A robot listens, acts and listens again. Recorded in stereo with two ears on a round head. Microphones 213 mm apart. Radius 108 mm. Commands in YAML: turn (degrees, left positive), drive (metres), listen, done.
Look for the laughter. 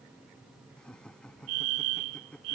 turn: 30
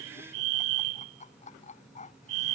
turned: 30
turn: 150
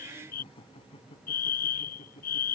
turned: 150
turn: 25
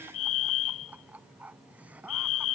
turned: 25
done: "Facing the laughter."